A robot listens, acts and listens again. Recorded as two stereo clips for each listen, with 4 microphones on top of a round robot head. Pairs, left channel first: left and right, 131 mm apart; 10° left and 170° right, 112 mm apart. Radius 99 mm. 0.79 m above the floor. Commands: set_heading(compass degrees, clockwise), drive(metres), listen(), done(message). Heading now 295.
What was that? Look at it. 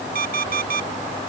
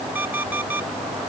set_heading(25)
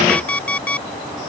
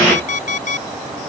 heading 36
set_heading(26)
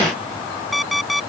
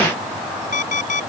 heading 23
done("Found it: an alarm clock, straight ahead.")